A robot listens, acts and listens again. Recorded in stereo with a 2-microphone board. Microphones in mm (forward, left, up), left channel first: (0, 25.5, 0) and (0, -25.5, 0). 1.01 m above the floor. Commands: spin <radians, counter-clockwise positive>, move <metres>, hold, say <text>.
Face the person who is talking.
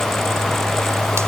hold
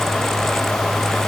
hold
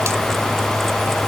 say I can't make out anyone speaking.